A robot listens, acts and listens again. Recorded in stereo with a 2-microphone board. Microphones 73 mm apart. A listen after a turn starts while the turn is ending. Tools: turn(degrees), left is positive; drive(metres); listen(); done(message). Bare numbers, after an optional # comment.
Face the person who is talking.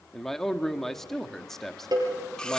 turn(30)
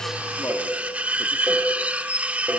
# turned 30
listen()
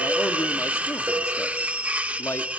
listen()
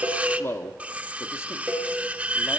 # So it is at 145° left.
turn(145)
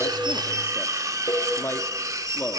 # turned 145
# The man speaking is now 35° left.
turn(35)
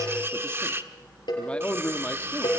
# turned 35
# The man speaking is now 15° left.
turn(15)
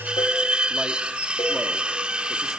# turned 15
listen()
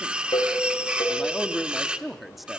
done("Found it: a man speaking, straight ahead.")